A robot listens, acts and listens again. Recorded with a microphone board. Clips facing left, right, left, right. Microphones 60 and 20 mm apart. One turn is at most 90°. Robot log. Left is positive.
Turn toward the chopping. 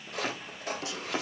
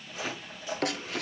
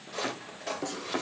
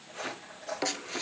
cmd yaw +90
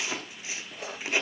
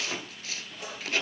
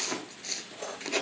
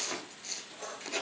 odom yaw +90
end: Facing the chopping, 2 to 4 m away.